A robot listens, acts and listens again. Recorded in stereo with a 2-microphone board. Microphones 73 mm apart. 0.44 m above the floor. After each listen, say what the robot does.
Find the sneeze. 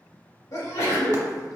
Turn 55° left.
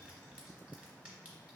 Keep listening.
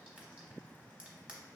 I heard a sneeze, but can't make it out now. It was about straight ahead or 70° left.